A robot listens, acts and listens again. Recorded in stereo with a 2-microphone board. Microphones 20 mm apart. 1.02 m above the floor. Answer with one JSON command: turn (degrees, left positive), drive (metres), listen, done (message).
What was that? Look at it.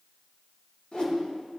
{"turn": 45}
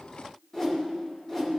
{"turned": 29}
{"turn": 20}
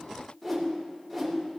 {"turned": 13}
{"done": "Facing the whoosh."}